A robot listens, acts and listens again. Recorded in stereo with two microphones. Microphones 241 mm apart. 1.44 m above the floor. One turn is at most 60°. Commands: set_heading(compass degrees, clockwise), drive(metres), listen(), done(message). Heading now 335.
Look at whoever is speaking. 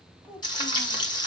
set_heading(5)
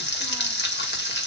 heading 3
listen()
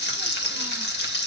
listen()
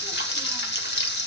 done("I heard a child speaking, but can't make it out now. It was about 15° left or 140° right.")